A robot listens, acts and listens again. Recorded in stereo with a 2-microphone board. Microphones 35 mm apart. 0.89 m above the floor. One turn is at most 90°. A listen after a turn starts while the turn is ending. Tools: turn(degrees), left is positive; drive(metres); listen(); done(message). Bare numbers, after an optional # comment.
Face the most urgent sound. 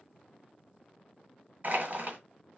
listen()
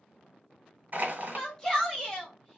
# The shout: about 15° left or 165° left.
turn(15)
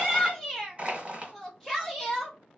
done("Found it: a shout, straight ahead.")